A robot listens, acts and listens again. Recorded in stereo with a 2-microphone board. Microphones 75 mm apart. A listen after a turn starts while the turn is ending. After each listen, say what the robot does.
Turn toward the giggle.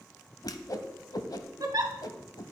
Turn 60° right.
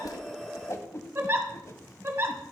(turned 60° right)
Turn 40° right.
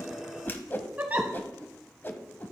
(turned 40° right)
Turn 25° right.
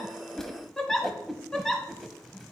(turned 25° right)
Facing the giggle.